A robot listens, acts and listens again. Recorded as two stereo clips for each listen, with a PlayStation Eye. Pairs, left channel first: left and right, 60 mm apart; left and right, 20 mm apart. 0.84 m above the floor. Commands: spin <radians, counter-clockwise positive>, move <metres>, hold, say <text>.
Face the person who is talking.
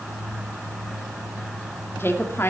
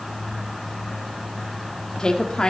spin 0.70
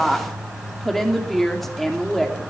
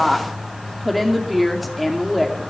say Found it: a woman speaking, straight ahead, 2 to 4 m away.